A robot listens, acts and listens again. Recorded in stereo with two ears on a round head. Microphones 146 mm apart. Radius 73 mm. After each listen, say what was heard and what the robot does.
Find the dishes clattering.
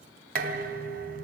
The dishes clattering: about 60° right or 120° right. Turn 60° right.
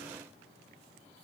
So it is at 60° right. Turn 60° right.
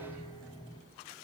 The dishes clattering is now 25° left. Turn 25° left.
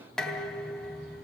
Found it: dishes clattering, straight ahead.